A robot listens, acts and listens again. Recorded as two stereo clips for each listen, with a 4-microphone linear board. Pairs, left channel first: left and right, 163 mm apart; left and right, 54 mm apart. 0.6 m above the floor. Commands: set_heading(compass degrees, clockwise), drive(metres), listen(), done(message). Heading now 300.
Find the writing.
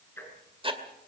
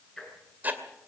set_heading(330)
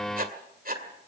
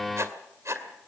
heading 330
set_heading(85)
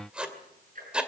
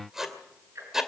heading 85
done("Facing the writing.")